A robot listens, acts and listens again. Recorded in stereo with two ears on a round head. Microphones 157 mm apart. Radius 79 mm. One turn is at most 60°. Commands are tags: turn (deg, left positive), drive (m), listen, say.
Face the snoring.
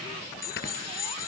<turn deg="60"/>
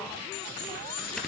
<say>Facing the snoring, 2 to 4 m away.</say>